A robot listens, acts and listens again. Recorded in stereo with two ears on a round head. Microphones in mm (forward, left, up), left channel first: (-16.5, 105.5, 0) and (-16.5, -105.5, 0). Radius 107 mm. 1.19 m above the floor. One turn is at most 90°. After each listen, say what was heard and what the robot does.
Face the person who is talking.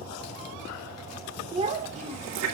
The child speaking: about 30° right or 150° right. Turn 30° right.
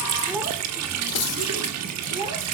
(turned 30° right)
The child speaking: about 20° right or 160° right. Turn 20° right.
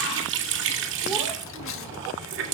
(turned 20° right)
Keep listening.
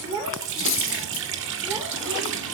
The child speaking: about 15° right or 165° right. Turn 15° right.
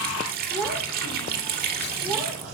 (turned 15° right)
Facing the child speaking.